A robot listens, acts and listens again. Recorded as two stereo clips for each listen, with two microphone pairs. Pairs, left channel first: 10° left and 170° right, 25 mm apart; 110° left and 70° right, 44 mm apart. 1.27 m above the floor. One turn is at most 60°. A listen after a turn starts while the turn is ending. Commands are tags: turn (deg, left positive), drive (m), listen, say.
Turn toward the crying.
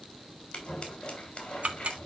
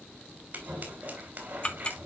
<listen/>
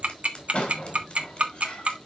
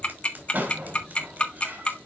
<listen/>
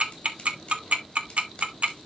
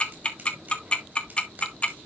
<say>I can't make out crying, only scissors and ticking.</say>